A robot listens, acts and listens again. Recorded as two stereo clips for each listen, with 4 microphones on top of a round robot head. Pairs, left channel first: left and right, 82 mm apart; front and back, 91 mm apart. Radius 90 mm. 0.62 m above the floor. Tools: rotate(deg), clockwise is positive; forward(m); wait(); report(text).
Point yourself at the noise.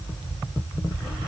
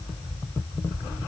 wait()
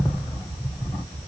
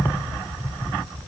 wait()
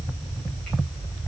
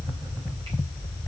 report("I can't make out anything.")